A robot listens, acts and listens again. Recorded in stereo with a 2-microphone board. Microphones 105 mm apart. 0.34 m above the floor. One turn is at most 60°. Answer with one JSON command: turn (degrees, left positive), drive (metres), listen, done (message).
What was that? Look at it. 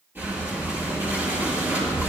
{"turn": -20}
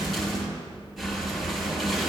{"done": "Facing the breathing, 2 to 4 m away."}